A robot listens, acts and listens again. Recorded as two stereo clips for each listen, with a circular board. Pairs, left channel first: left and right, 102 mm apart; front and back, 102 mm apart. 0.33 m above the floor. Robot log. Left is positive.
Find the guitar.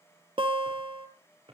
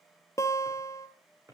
note: The guitar: 60° right.
cmd yaw -60
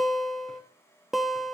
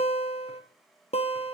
end: Facing the guitar, 1 to 2 m away.